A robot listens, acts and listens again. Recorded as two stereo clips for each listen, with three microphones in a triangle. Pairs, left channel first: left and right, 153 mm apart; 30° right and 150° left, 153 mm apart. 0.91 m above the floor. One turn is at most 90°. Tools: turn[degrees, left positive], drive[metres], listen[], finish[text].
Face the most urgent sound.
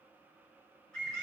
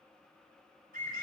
Action: listen[]
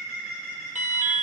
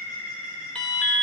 Thought: The alarm: 115° right.
Action: turn[-90]
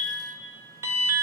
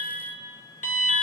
Thought: The alarm is now 20° right.
Action: turn[-20]
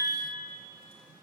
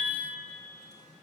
Action: listen[]
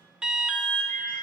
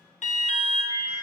Action: finish[Found it: an alarm, straight ahead.]